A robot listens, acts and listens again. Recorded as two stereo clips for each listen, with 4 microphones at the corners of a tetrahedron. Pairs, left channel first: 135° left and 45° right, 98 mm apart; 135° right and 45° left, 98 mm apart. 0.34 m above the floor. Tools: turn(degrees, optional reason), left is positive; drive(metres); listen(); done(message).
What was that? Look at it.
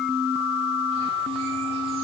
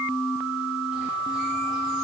listen()
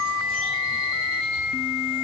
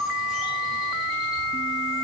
listen()
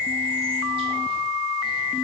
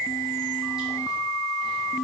done("I can't make out anything to turn to.")